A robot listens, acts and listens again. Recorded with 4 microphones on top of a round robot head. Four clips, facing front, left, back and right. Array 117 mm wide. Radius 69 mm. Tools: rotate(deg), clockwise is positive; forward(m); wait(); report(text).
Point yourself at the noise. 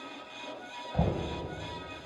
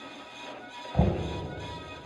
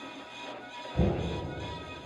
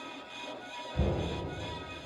rotate(-55)
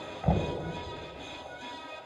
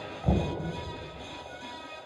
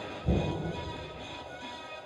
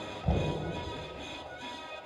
rotate(-10)
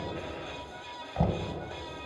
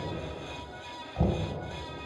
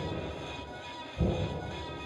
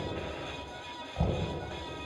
report("Found it: knocking, straight ahead.")